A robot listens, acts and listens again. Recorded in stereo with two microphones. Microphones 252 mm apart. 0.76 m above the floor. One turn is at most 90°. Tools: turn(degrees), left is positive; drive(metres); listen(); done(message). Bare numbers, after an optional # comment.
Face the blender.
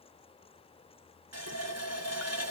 listen()
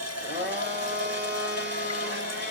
# The blender: about 45° right or 135° right.
turn(-45)
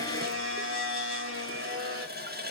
# So it is at 80° right.
turn(-80)
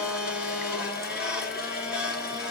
done("Found it: a blender, straight ahead, 1 to 2 m away.")